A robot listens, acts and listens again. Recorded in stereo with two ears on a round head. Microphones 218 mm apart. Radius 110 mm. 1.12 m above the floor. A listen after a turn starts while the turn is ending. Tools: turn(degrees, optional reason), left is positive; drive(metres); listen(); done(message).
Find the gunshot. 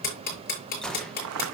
turn(degrees=30)
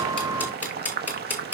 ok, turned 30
listen()
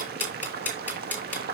done("I heard a gunshot, but can't make it out now. It was about 25° right or 145° left.")